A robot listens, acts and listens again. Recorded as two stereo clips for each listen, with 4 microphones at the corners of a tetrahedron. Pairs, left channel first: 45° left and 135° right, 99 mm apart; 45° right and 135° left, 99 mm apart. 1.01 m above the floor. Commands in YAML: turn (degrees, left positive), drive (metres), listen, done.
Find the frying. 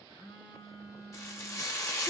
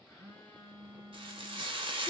turn: 105
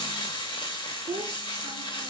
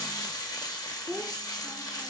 done: "Found it: frying, straight ahead."